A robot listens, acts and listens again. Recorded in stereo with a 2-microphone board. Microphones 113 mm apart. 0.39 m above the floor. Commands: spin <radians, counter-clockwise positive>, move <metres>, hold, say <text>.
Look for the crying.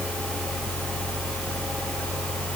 hold
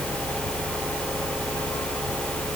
hold
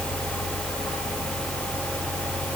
say I can't make out crying.